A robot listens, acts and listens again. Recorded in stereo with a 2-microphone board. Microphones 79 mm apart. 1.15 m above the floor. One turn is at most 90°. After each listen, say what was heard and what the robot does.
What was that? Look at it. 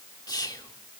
The whispering: about 55° left or 125° left. Turn 55° left.
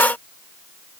Keep listening.
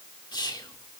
So it is at 70° left. Turn 70° left.
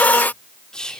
The whispering is now 10° left. Turn 10° left.
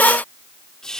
The whispering is now 10° left. Turn 10° left.
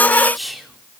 Facing the whispering.